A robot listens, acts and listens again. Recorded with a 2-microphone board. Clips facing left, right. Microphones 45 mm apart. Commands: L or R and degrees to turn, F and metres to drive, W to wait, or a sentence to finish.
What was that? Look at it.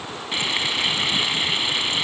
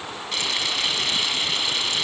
L20
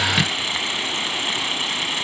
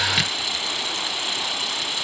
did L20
L135
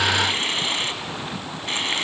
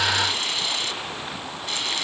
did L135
L40
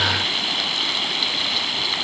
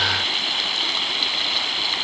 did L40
Found it: frying, straight ahead, 1 to 2 m away.